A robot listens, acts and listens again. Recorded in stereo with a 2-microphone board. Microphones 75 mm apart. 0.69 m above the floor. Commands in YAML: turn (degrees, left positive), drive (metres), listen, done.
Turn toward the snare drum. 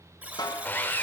turn: 70
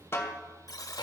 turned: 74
turn: 35
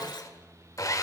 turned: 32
listen: true
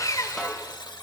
listen: true
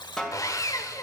done: "Found it: a snare drum, straight ahead, 1 to 2 m away."